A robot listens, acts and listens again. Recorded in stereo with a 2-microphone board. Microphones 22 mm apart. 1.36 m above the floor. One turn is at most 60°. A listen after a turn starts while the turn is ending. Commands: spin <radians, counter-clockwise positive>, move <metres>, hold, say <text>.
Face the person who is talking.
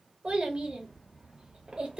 spin -1.05
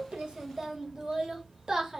spin -0.61
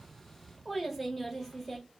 say Facing the child speaking, under 1 m away.